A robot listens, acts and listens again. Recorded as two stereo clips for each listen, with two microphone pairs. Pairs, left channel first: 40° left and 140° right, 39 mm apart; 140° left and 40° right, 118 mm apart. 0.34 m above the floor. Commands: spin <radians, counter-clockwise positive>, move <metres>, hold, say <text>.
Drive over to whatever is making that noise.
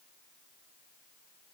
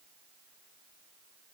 hold
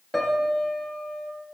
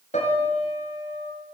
spin 2.18
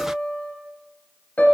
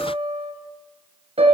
spin -0.17
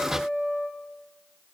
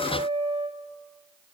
move 1.0
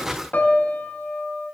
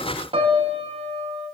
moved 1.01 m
move 1.0
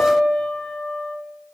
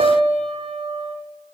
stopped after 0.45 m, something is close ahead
spin -0.26
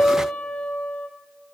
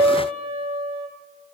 say Arrived at the piano, straight ahead.